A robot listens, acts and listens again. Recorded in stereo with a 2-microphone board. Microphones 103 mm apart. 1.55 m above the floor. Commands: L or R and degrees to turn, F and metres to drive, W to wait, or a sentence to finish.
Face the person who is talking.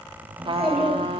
R30
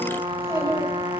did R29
R150
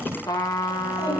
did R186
L40
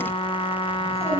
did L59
R25
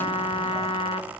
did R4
R25
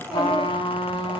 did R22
W
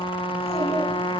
I heard a child speaking from this way, but can't make it out now.